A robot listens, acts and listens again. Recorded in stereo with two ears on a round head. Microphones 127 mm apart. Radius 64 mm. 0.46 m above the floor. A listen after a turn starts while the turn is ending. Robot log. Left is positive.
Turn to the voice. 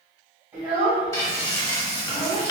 cmd yaw -30
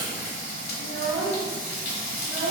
note: So it is at 135° right.
cmd yaw -135
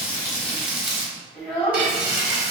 end: Found it: a child speaking, straight ahead.